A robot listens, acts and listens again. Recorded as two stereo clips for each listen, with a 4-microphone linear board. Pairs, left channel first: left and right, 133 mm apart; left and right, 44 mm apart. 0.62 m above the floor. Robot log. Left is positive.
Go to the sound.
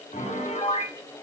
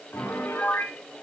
note: The piano: about 60° left or 120° left.
cmd yaw +60
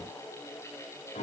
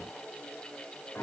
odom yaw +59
note: So it is at 65° left.
cmd yaw +65
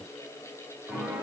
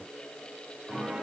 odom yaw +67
cmd fwd 1.0
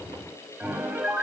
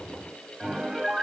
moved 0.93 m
note: The piano is now 10° right.
cmd yaw -10
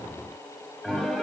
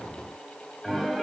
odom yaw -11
cmd fwd 1.0
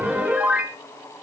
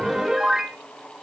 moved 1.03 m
note: The piano is now 10° right.
cmd yaw -10
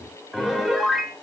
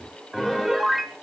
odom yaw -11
cmd fwd 1.0
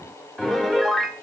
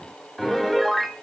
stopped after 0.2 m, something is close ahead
end: Arrived at the piano, straight ahead.